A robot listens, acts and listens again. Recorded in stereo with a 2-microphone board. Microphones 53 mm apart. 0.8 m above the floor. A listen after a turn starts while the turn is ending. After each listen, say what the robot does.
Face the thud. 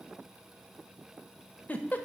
Keep listening.
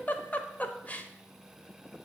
Keep listening.
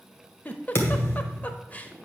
Turn 50° left.
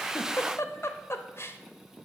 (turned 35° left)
Keep listening.
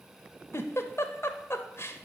I heard a thud, but can't make it out now. It was about 15° left or 95° left.